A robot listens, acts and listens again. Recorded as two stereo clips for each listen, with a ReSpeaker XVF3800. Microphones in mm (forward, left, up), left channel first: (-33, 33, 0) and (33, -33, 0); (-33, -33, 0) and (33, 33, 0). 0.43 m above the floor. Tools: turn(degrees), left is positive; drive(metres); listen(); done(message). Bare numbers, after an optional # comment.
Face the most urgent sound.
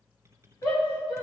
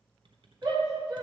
# The shout: 95° left.
turn(95)
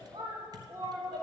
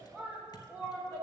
# The shout is now 10° right.
turn(-10)
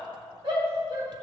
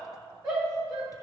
done("Facing the shout, 2 to 4 m away.")